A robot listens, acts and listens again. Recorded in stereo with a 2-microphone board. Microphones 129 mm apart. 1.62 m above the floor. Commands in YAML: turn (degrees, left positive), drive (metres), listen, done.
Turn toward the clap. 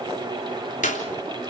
turn: 90
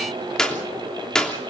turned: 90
done: "Facing the clap."